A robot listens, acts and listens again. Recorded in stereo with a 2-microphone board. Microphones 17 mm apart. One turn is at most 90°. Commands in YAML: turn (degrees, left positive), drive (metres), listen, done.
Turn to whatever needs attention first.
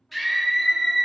turn: 30
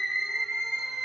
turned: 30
turn: -25
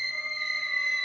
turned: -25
done: "Found it: a scream, straight ahead, 1 to 2 m away."